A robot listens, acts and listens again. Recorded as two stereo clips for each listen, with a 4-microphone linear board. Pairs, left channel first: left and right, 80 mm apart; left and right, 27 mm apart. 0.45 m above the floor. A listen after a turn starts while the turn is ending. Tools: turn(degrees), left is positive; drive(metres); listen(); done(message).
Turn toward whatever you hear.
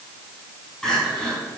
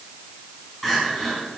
turn(degrees=30)
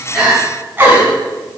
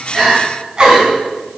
turn(degrees=-25)
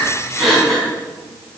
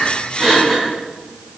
done("Found it: crying, straight ahead.")